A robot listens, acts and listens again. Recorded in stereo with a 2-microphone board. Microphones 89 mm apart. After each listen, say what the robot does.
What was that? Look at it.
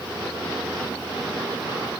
Keep listening.
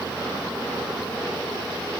Keep listening.
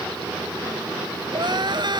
Turn 55° right.
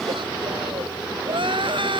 Turn 70° right.
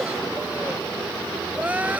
Turn 15° right.
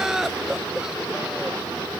Found it: crying, straight ahead.